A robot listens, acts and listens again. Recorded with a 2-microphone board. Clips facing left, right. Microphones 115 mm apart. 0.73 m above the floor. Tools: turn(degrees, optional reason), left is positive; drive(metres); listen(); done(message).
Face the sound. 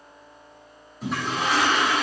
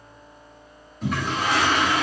turn(degrees=30)
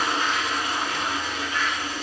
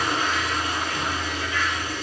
turn(degrees=145, reason="So it is at 145° left.")
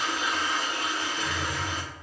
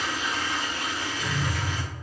turn(degrees=75, reason="The toilet flushing is now 75° left.")
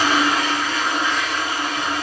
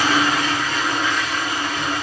turn(degrees=35, reason="The toilet flushing is now 35° left.")
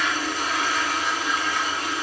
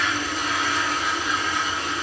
done("Facing the toilet flushing, 1 to 2 m away.")